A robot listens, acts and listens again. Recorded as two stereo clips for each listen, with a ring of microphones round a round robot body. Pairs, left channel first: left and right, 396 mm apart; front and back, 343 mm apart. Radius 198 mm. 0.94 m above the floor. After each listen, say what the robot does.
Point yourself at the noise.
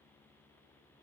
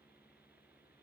Keep listening.
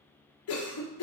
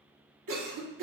Turn 145° left.
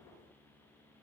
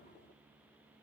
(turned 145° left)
Found it: a cough, straight ahead, 1 to 2 m away.